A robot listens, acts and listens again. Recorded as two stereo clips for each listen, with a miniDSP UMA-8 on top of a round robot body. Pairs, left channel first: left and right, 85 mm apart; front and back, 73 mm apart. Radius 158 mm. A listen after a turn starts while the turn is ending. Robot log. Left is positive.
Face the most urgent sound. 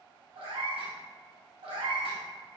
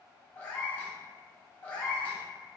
cmd idle
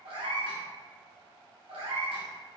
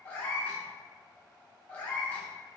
cmd idle
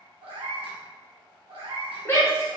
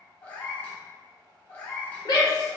note: The shout: 30° left.
cmd yaw +30
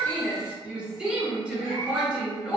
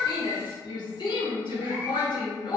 note: The shout is now 10° right.
cmd yaw -10
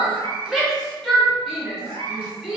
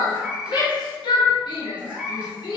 end: Found it: a shout, straight ahead, 1 to 2 m away.